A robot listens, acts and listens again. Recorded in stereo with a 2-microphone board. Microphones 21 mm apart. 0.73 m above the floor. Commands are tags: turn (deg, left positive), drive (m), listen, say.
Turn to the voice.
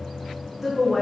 <turn deg="-20"/>
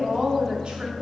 <turn deg="-120"/>
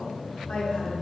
<turn deg="60"/>
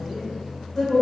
<turn deg="15"/>
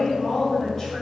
<turn deg="10"/>
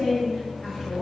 <say>Facing the woman speaking.</say>